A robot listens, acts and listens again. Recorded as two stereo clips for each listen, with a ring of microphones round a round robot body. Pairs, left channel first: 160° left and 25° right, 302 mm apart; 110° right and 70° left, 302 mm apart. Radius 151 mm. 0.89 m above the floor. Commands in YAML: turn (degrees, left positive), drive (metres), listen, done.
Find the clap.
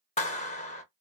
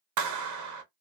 turn: 90
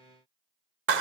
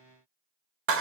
turn: 25
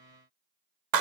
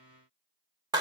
turn: -10
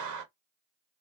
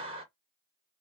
done: "Facing the clap, under 1 m away."